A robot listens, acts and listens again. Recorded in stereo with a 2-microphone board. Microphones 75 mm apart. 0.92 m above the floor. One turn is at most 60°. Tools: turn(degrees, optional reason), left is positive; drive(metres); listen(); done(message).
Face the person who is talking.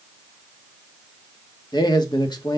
turn(degrees=60, reason="The man speaking: about 75° left or 105° left.")
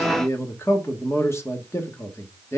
turn(degrees=40, reason="So it is at 40° left.")
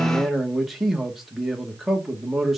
done("Facing the man speaking, 1 to 2 m away.")